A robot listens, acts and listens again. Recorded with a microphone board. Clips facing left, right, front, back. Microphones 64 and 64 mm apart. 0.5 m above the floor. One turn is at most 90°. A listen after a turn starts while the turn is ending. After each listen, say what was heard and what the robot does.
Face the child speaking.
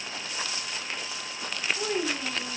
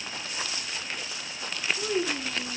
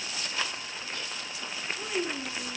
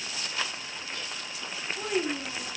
The child speaking: 135° left. Turn 90° left.
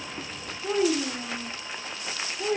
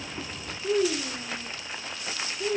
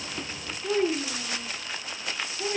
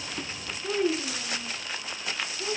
The child speaking is now 75° left. Turn 75° left.
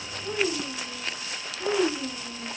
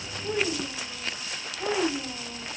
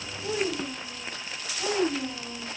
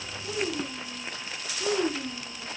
The child speaking is now 30° right. Turn 30° right.
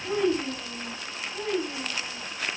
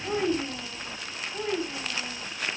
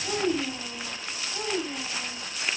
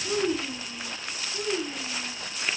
Found it: a child speaking, straight ahead.